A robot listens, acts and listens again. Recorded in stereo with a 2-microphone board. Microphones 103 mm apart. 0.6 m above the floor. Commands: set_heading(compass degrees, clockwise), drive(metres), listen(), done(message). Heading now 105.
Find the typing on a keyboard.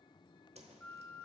listen()
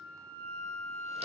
listen()
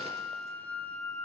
done("I can't make out typing on a keyboard, only a flute and a whoosh.")